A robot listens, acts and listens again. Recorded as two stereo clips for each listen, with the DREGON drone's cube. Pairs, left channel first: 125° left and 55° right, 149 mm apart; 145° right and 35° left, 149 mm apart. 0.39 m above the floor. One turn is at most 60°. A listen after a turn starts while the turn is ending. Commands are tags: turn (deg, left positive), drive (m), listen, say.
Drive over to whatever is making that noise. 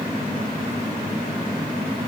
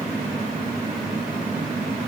<listen/>
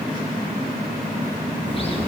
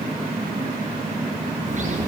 <turn deg="60"/>
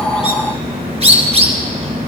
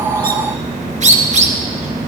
<drive m="1.0"/>
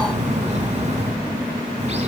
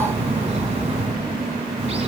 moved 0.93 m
<turn deg="-15"/>
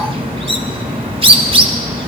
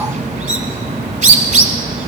<drive m="1.0"/>
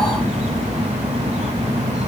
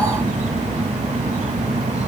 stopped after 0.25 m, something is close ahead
<turn deg="-10"/>
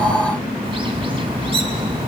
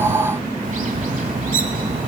<say>I am next to the bird.</say>